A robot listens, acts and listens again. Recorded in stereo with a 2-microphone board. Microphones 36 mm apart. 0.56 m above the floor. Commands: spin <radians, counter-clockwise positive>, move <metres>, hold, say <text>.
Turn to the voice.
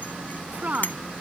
spin -0.70
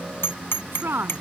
spin -1.75
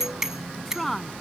say Facing the woman speaking.